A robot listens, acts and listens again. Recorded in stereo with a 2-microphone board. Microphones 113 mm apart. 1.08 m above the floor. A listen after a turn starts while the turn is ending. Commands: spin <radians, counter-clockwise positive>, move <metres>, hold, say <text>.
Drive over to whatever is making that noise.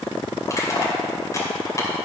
spin 0.52
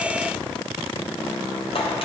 spin 2.09
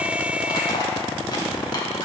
spin 0.70
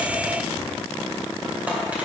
spin -0.26
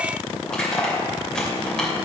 move 1.0
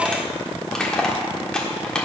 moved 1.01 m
move 1.0
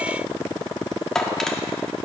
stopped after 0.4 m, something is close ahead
say I am next to the crushing.